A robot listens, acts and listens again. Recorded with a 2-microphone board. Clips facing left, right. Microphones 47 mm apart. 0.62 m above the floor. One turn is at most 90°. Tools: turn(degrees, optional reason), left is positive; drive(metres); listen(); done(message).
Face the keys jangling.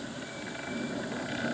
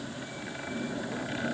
listen()
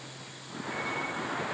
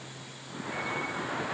listen()
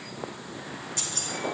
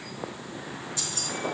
turn(degrees=55, reason="The keys jangling: about 55° left or 125° left.")
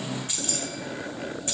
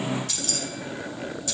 turn(degrees=35, reason="So it is at 35° left.")
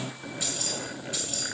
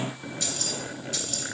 turn(degrees=15, reason="The keys jangling is now 15° left.")
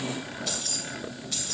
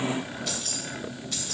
done("Facing the keys jangling.")